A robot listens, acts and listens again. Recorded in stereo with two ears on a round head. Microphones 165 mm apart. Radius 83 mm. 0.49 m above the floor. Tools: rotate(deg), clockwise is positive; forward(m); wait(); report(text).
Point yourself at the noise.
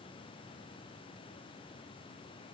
wait()
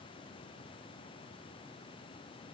wait()
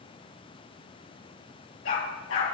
rotate(-90)
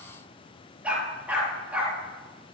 rotate(10)
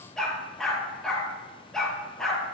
report("Facing the dog barking, over 4 m away.")